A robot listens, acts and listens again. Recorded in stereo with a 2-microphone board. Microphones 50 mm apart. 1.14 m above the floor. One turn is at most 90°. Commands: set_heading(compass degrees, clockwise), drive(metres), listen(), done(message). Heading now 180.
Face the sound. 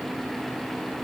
listen()
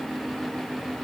listen()
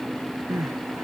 set_heading(255)
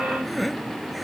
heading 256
done("Found it: crying, straight ahead.")